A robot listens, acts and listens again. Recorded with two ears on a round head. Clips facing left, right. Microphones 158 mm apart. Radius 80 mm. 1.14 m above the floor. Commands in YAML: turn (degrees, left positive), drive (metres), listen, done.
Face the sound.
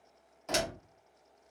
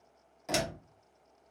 turn: -30
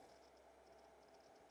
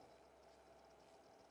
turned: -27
listen: true
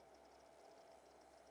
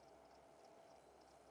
done: "I heard a door slam, but can't make it out now. It was about 15° left or 140° right."